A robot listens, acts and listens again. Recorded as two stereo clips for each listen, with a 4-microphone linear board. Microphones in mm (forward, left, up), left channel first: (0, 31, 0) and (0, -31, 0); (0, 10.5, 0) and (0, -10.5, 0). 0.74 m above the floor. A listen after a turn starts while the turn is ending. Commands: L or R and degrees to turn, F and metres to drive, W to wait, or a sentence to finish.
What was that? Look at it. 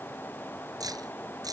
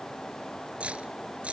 R90
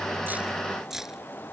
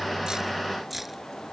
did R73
R10
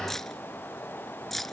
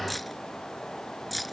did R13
Found it: keys jangling, straight ahead.